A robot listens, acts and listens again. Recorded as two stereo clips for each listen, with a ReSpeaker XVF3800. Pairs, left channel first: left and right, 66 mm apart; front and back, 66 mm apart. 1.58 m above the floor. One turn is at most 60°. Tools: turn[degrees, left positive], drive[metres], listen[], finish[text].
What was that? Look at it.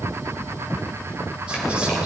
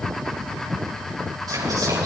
Thought: The whispering: 165° right.
Action: turn[-60]
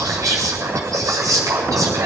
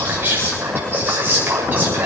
Thought: The whispering is now 120° right.
Action: turn[-60]
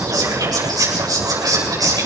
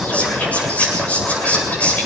Thought: The whispering is now 70° right.
Action: turn[-60]
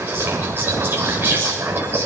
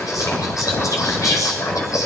Thought: The whispering is now 30° right.
Action: turn[-30]
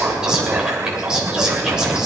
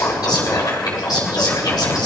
Thought: The whispering is now 10° right.
Action: turn[-10]
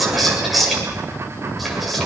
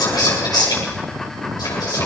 Action: finish[Facing the whispering, over 4 m away.]